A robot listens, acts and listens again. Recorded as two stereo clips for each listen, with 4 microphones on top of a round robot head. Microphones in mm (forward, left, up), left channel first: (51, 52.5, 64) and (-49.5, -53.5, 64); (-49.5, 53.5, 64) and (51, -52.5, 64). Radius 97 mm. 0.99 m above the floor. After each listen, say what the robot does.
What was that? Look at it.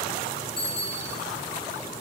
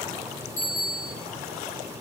Turn 130° left.
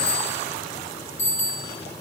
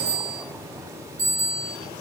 Facing the bicycle bell, over 4 m away.